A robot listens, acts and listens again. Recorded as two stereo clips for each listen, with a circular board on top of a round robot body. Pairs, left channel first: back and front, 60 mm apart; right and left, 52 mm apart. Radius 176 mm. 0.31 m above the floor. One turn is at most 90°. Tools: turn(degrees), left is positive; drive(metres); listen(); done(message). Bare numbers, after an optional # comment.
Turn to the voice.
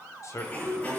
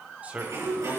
# The man speaking: 150° left.
turn(90)
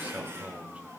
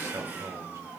# The man speaking is now 65° left.
turn(65)
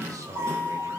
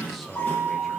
done("Found it: a man speaking, straight ahead, 2 to 4 m away.")